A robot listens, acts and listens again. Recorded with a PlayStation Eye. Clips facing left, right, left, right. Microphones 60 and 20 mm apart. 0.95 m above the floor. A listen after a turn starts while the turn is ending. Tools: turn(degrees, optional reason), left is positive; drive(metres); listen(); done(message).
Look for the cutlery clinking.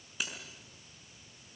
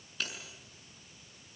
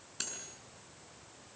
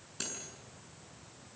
turn(degrees=30)
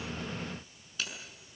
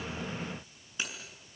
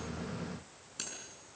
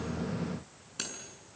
turn(degrees=-20, reason="So it is at 20° right.")
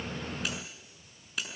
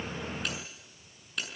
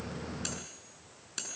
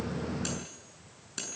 done("Facing the cutlery clinking.")